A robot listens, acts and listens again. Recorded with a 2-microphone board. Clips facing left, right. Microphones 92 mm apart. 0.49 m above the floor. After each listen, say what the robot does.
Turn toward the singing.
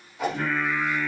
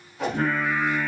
Turn 50° right.
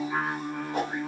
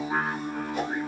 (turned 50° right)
Turn 70° right.
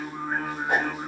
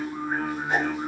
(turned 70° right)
Found it: singing, straight ahead, under 1 m away.